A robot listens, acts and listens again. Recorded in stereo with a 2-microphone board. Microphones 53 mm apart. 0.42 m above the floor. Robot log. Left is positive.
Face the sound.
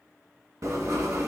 cmd yaw -90
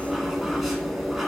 end: Facing the writing, 1 to 2 m away.